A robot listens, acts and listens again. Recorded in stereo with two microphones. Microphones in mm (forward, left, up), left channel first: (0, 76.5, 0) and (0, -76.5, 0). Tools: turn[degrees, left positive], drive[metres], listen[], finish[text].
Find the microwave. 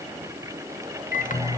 Thought: The microwave: about 60° left or 120° left.
Action: turn[60]
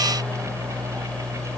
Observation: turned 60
Thought: So it is at 10° left.
Action: turn[10]
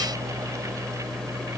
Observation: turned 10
Action: finish[Found it: a microwave, straight ahead, 1 to 2 m away.]